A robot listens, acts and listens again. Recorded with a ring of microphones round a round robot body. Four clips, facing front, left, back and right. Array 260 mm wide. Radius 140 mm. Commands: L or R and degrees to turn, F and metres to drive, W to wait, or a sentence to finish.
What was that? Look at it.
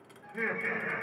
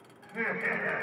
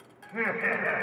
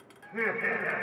R165
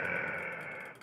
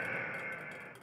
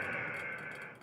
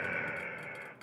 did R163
R20
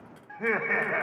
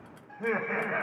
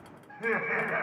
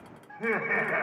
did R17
R45
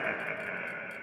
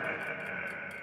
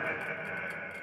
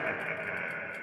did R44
R65
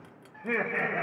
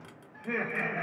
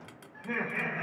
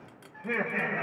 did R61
R25
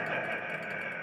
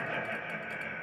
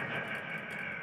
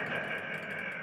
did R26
Found it: laughter, straight ahead.